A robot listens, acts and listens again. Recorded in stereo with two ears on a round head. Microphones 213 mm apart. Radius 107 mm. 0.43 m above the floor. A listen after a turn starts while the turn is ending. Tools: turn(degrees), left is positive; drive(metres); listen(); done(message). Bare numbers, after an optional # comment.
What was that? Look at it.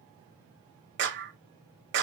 # The clap: about 50° right or 130° right.
turn(-50)
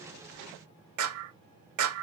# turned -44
# So it is at 80° right.
turn(-80)
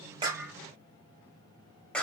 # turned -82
done("Facing the clap, 1 to 2 m away.")